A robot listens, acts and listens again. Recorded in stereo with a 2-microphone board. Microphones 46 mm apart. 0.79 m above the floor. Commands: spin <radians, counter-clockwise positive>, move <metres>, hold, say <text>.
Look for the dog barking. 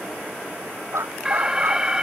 spin -1.57
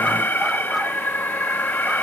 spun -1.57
hold
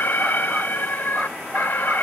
hold
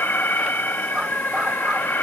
say I heard a dog barking from this way, but can't make it out now.